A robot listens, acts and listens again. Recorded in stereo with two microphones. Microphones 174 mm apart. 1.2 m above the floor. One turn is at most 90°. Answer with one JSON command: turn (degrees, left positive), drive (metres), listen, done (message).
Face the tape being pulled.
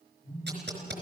{"turn": -90}
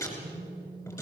{"turn": 20}
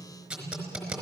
{"done": "Found it: tape being pulled, straight ahead, over 4 m away."}